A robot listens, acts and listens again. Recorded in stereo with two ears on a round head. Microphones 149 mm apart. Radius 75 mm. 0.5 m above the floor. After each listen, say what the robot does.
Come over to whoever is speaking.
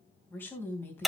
Turn 30° left.
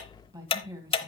Turn 20° right.
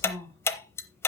Drive 1.0 m forward.
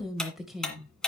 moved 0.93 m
Drive 1.0 m forward.
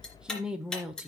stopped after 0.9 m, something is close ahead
Arrived at the woman speaking, straight ahead.